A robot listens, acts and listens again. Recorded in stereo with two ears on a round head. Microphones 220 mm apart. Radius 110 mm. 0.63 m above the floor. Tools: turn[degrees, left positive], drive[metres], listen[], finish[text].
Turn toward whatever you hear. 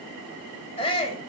Thought: The shout: about 25° left or 155° left.
Action: turn[25]
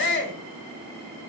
Thought: So it is at 130° left.
Action: turn[130]
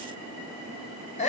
Thought: The shout is now 30° left.
Action: turn[30]
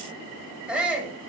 Action: finish[Found it: a shout, straight ahead, 2 to 4 m away.]